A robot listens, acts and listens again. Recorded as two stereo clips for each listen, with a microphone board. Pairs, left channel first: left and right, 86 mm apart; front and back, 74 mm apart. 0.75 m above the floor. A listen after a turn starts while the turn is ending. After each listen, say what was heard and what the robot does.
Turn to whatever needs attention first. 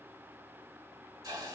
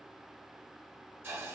Keep listening.
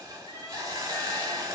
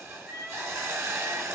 The crying: 105° left. Turn 105° left.
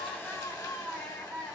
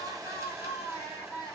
Facing the crying.